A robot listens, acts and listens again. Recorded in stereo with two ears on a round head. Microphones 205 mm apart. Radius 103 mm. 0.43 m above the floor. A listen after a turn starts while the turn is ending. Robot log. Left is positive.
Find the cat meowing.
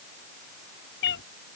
note: The cat meowing: about 60° left or 120° left.
cmd yaw +60
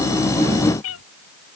note: So it is at 65° left.
cmd yaw +65
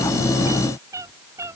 note: The cat meowing is now 15° right.
cmd yaw -15
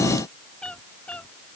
end: Found it: a cat meowing, straight ahead.